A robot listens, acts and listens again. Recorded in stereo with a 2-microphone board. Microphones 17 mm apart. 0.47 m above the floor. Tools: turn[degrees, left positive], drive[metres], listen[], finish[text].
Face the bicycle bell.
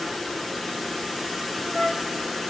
Action: listen[]
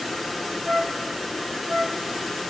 Action: listen[]
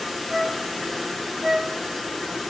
Action: finish[I can't make out a bicycle bell, only a flute.]